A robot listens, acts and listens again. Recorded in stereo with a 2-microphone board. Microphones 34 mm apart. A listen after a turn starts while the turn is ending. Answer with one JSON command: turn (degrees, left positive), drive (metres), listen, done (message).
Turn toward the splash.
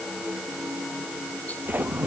{"turn": -65}
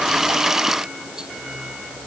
{"listen": true}
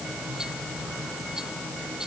{"done": "I heard a splash, but can't make it out now. It was about straight ahead or 50° right."}